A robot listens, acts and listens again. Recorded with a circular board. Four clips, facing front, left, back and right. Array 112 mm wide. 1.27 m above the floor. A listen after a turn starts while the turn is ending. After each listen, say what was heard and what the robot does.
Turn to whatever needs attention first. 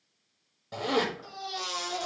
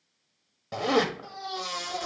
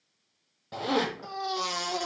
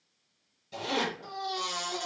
The baby crying: 170° left. Turn 170° left.
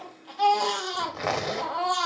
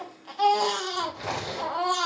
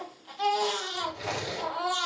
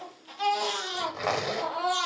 The baby crying is now 45° left. Turn 45° left.
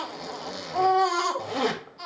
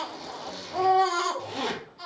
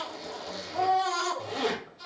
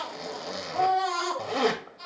The baby crying is now 20° left. Turn 20° left.
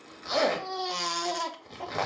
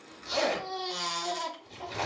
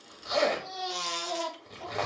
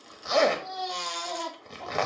Found it: a baby crying, straight ahead, under 1 m away.